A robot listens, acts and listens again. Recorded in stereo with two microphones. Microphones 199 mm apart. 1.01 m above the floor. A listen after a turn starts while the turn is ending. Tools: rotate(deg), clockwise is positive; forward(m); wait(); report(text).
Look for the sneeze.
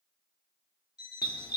wait()
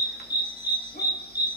wait()
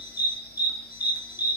report("I can't make out a sneeze, only a dog barking and an alarm clock.")